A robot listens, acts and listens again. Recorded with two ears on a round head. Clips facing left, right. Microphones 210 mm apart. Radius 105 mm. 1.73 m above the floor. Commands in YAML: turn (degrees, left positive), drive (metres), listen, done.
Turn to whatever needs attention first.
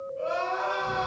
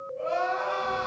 turn: 30
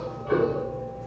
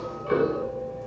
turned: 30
listen: true
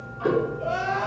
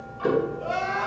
turn: -20
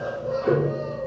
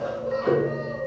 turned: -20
listen: true
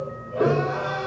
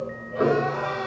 listen: true
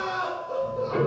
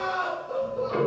done: "Facing the crying, 1 to 2 m away."